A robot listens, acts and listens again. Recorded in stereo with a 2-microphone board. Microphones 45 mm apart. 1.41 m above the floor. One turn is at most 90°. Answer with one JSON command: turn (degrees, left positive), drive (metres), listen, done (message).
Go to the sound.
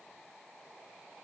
{"listen": true}
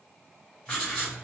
{"turn": 20}
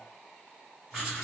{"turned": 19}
{"drive": 1.0}
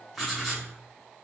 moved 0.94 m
{"drive": 1.0}
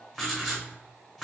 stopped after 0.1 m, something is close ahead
{"done": "I am next to the writing."}